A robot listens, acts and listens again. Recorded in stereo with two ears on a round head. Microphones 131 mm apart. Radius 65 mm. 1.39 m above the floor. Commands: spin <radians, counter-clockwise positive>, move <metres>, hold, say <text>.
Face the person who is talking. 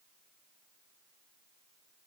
hold
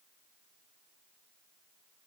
hold
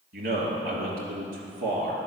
spin -1.05
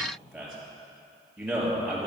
say Found it: a man speaking, straight ahead, 2 to 4 m away.